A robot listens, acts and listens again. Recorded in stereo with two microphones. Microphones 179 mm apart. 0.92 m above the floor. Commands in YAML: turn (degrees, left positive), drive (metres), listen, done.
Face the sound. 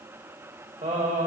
turn: -45
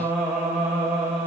done: "Facing the singing."